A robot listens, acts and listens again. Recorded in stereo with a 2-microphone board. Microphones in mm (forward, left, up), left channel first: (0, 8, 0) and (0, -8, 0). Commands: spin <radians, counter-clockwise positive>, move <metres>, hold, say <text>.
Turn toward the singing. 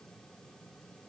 hold
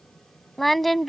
spin 0.52
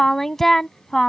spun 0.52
spin 0.35
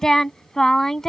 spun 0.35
spin 2.62
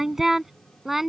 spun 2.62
spin -0.35
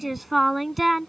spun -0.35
say Facing the singing.